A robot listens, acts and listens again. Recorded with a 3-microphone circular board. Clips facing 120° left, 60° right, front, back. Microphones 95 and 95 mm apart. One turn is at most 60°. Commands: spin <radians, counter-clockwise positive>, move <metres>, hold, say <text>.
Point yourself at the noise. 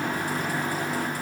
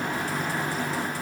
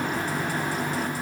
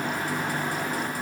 hold
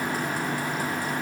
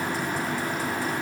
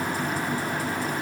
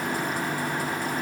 hold
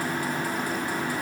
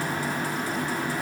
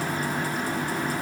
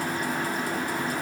say I can't make out anything to turn to.